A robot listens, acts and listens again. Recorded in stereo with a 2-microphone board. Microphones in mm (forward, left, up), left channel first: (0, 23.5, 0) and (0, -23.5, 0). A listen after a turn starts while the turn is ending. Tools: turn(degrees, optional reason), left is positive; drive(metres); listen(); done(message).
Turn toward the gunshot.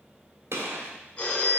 turn(degrees=-70, reason="The gunshot: about 70° right or 110° right.")
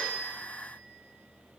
listen()
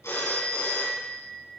done("I heard a gunshot, but can't make it out now. It was about straight ahead or 40° right.")